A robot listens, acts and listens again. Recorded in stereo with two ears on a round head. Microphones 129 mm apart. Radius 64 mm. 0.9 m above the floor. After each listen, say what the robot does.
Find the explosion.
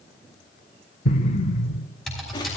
Turn 50° left.
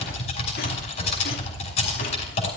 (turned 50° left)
Keep listening.
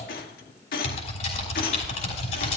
I heard an explosion, but can't make it out now. It was about straight ahead or 80° left.